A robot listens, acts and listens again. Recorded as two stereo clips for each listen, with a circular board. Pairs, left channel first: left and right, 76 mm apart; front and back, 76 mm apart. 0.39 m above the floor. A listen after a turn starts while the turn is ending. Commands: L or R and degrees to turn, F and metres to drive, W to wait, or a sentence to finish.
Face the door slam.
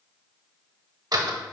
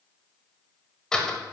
R75
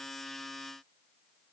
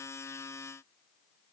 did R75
Facing where the door slam came from. I can't hear it now.